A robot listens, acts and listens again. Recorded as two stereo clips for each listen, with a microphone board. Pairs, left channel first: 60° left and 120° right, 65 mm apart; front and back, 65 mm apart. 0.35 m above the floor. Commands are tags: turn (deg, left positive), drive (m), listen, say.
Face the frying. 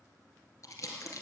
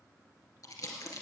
<listen/>
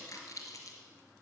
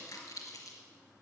<listen/>
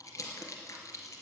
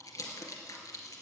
<say>I can't make out frying, only crumpling.</say>